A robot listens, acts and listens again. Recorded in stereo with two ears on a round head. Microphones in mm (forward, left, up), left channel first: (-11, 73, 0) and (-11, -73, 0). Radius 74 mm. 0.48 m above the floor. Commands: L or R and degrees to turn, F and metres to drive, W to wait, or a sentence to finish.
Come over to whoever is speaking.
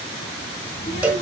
L35
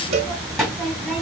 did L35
F1.0
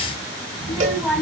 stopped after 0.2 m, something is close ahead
Something is in my way. I am facing the child speaking but have not reached it.